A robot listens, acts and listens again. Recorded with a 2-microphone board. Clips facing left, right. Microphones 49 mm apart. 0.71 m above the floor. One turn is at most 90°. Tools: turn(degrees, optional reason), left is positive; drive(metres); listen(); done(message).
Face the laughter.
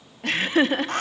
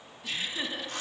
turn(degrees=55, reason="The laughter: about 55° left or 125° left.")
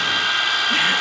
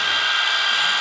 listen()
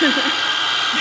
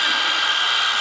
turn(degrees=55, reason="So it is at 55° left.")
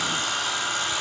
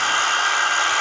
listen()
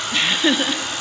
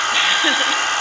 turn(degrees=-10, reason="The laughter is now 10° right.")
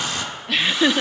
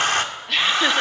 done("Found it: laughter, straight ahead.")